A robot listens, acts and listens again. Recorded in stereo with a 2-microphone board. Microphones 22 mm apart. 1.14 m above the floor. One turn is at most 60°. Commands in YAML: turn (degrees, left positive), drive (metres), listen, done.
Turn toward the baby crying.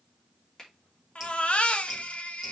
turn: 60
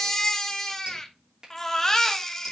turn: 20
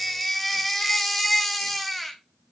done: "Found it: a baby crying, straight ahead, 1 to 2 m away."